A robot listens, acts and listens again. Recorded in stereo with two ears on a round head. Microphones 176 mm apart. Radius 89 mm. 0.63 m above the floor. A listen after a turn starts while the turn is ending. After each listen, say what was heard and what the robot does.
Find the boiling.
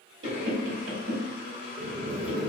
The boiling: about 30° right or 150° right. Turn 30° right.
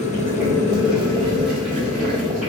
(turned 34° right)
Facing the boiling, 1 to 2 m away.